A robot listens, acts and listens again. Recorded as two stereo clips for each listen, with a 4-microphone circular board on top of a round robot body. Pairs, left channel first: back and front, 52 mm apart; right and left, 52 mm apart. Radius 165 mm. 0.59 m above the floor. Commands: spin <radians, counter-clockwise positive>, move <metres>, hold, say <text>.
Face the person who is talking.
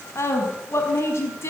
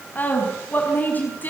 spin -2.53
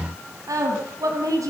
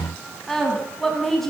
say Found it: a woman speaking, straight ahead.